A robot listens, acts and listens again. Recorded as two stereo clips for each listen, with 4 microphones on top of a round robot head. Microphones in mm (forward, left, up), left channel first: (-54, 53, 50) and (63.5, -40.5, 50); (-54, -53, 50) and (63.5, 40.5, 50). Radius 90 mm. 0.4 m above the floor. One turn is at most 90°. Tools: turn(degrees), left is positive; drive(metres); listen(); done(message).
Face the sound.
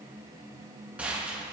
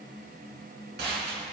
turn(degrees=45)
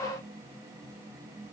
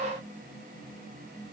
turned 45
done("Facing where the gunshot came from. I can't hear it now.")